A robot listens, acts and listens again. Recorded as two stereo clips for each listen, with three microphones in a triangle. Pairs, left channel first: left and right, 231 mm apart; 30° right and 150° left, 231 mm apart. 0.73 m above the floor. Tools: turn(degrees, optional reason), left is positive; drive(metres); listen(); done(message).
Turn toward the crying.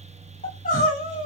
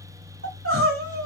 turn(degrees=140, reason="The crying: 140° left.")
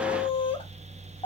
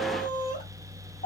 turn(degrees=25, reason="The crying is now 25° left.")
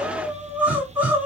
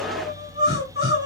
done("Found it: crying, straight ahead.")